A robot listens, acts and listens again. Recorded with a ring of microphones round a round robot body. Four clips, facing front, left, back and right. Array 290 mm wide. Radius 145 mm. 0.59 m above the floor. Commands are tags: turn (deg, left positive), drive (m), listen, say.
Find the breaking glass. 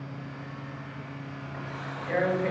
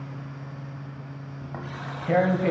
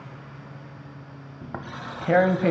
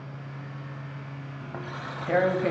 <listen/>
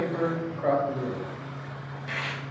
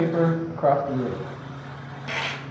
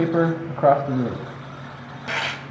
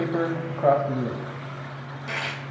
<listen/>
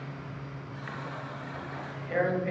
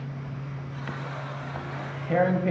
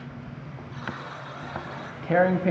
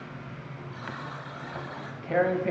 <say>I can't make out breaking glass, only tearing paper and a buzzer.</say>